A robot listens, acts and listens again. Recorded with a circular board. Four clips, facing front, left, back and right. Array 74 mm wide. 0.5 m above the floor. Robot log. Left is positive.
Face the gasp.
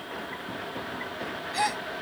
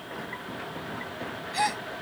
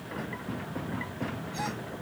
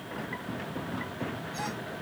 note: The gasp: 50° left.
cmd yaw +50
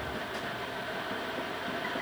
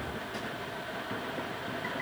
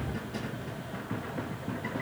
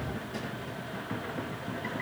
end: Facing where the gasp came from. I can't hear it now.